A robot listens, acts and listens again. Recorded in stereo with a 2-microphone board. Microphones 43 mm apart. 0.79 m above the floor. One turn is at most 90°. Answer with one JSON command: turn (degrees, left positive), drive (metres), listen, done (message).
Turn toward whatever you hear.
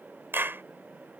{"turn": -60}
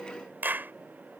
{"turn": -55}
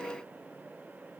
{"listen": true}
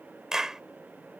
{"turn": -15}
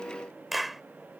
{"done": "Found it: a clap, straight ahead."}